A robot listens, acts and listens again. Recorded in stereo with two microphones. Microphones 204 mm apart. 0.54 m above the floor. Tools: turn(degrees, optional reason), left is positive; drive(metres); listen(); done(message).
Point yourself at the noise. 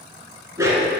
turn(degrees=-30)
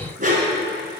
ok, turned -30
turn(degrees=-140, reason="So it is at 140° right.")
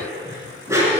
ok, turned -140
turn(degrees=-15, reason="The dog barking is now 15° right.")
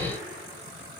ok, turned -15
listen()
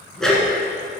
done("Found it: a dog barking, straight ahead, 1 to 2 m away.")